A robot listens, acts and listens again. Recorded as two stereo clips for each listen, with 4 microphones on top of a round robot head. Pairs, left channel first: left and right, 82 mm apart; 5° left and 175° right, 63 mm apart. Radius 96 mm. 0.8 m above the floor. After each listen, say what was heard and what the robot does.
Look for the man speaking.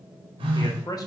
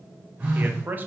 The man speaking: 125° left. Turn 125° left.
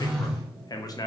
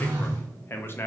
The man speaking is now 55° left. Turn 55° left.
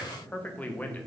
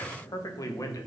The man speaking is now 20° left. Turn 20° left.
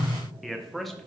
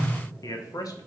Facing the man speaking.